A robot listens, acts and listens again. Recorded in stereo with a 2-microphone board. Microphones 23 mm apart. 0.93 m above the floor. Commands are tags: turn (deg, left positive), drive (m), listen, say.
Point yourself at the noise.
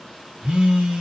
<turn deg="-65"/>
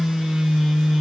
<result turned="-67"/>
<turn deg="-20"/>
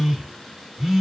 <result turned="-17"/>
<say>Found it: a phone buzzing, straight ahead, 1 to 2 m away.</say>